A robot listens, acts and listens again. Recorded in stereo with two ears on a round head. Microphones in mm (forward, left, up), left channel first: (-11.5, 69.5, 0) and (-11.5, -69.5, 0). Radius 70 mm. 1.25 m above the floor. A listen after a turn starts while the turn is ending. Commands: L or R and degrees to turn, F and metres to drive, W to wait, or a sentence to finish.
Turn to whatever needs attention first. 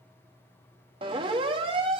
R35
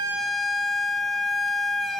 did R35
Facing the siren.